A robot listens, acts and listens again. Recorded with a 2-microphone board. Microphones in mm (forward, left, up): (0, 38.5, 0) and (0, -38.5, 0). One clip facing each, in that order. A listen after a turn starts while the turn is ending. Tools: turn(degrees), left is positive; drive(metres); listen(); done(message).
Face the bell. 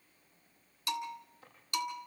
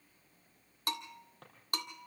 turn(degrees=-45)
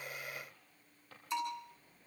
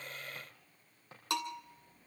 turn(degrees=-90)
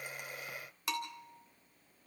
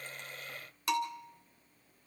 done("Found it: a bell, straight ahead, 1 to 2 m away.")